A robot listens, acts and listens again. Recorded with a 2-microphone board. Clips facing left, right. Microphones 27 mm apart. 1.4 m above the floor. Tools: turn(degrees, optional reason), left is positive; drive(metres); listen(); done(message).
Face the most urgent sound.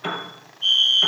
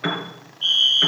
turn(degrees=-40, reason="The fire alarm: about 40° right or 140° right.")
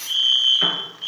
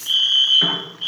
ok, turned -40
turn(degrees=-85, reason="So it is at 85° right.")
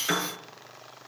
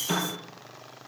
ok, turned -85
listen()
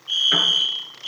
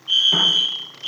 turn(degrees=-10, reason="The fire alarm is now 10° right.")
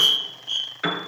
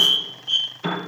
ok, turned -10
done("Facing the fire alarm.")